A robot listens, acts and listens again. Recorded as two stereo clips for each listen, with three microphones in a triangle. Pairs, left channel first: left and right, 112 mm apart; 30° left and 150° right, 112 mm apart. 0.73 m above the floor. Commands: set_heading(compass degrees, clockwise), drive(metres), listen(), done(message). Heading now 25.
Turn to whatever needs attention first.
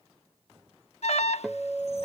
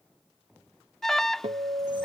set_heading(270)
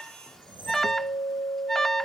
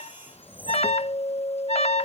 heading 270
done("Facing the alarm.")